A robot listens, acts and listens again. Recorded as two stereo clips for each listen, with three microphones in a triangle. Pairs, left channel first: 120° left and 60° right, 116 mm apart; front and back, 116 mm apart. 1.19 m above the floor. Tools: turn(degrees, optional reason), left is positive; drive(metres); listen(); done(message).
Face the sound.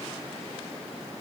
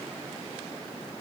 listen()
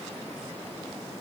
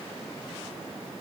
listen()
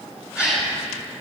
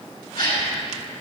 turn(degrees=20, reason="The gasp: 20° left.")
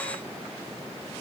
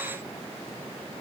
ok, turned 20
done("Facing where the gasp came from. I can't hear it now.")